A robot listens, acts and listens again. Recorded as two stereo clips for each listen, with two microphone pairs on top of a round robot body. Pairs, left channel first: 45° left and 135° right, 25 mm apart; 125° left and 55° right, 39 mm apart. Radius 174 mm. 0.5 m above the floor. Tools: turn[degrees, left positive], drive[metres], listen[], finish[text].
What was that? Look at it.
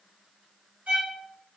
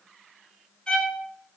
Thought: The violin: 160° right.
Action: turn[-160]
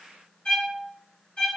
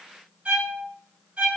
Action: finish[Found it: a violin, straight ahead.]